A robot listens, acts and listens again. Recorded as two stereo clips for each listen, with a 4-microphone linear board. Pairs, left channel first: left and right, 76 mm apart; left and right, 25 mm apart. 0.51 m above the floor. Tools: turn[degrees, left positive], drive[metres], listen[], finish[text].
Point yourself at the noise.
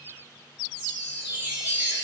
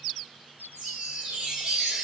Thought: The chime: about 20° right or 160° right.
Action: turn[-20]
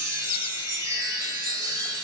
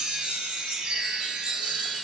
Thought: So it is at 140° right.
Action: turn[-140]
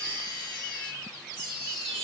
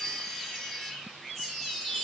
Thought: The chime is now 15° left.
Action: turn[15]
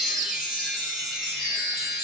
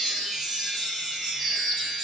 Thought: The chime is now 10° right.
Action: turn[-10]
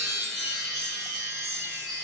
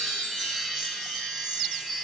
Action: finish[Found it: a chime, straight ahead.]